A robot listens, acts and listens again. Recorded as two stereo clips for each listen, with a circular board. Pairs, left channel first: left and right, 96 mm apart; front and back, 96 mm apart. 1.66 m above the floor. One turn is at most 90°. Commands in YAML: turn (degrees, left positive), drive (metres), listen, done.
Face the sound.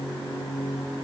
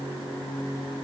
listen: true
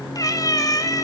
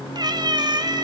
turn: 90
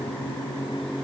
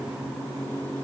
turn: 50
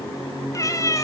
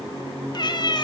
turn: 40
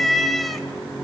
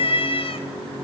done: "Found it: a cat meowing, straight ahead."